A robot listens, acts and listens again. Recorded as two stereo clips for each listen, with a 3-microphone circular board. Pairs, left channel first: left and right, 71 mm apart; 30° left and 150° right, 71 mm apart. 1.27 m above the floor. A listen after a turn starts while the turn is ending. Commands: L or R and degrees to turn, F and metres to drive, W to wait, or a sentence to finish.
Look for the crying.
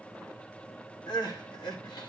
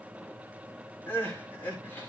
L95
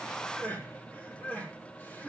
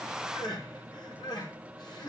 L25
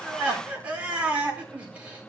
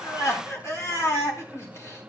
R20
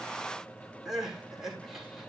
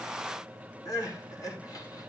Facing the crying, over 4 m away.